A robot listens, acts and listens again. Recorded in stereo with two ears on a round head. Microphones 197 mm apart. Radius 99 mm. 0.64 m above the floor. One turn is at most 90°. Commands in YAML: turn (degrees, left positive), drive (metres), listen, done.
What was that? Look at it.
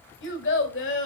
turn: 65
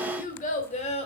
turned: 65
turn: 30
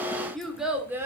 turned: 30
turn: -10
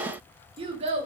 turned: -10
turn: -30
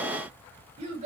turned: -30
turn: -30
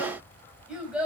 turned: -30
done: "Facing the child speaking, 2 to 4 m away."